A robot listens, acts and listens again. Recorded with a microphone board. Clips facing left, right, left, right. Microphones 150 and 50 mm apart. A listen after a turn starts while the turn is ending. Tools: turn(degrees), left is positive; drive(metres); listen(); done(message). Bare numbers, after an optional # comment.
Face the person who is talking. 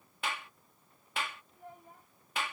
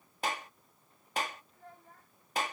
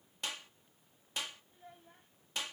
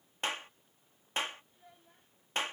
# The child speaking: about 15° left or 165° left.
turn(15)
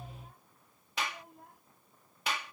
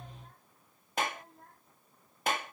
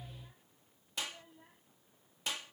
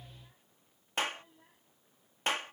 turn(30)
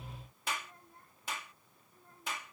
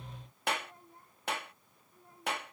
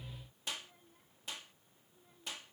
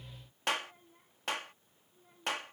# So it is at 15° right.
turn(-15)
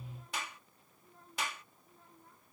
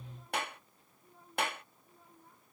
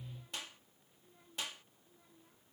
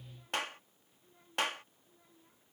done("Facing the child speaking.")